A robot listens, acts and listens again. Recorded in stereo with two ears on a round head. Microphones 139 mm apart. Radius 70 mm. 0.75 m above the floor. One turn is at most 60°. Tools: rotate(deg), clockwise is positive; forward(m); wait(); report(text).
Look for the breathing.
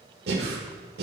rotate(60)
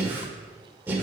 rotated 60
rotate(15)
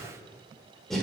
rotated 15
report("Found it: breathing, straight ahead, 1 to 2 m away.")